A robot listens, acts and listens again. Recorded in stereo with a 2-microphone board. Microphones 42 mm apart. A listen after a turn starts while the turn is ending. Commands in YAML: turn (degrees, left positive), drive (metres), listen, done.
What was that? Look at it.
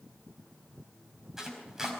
turn: -30
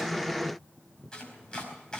turn: 20
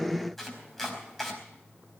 done: "Found it: chopping, straight ahead."